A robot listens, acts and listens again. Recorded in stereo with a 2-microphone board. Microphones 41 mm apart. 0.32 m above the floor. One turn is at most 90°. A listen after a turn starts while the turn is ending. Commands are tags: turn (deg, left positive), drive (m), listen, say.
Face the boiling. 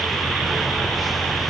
<listen/>
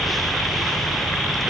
<listen/>
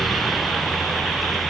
<say>I can't make out boiling to turn to.</say>